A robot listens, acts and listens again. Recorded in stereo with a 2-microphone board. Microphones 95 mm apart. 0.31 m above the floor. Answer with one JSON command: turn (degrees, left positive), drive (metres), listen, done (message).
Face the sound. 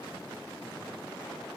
{"listen": true}
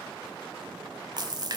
{"turn": -45}
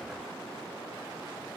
{"listen": true}
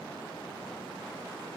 {"done": "I heard a splash, but can't make it out now. It was about straight ahead or 90° right."}